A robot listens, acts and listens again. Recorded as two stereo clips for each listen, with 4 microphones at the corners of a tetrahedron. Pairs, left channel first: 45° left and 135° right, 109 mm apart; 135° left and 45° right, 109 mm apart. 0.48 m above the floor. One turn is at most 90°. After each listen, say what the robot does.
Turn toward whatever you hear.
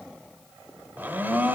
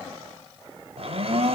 Turn 65° right.
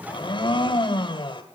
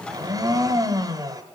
Found it: a blender, straight ahead.